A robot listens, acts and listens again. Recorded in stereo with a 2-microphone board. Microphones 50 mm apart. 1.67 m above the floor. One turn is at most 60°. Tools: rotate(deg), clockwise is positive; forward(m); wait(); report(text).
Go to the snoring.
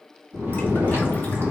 rotate(60)
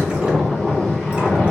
rotate(15)
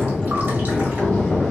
forward(1.0)
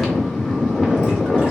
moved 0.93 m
forward(1.0)
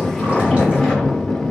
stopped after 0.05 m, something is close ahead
report("I am next to the snoring.")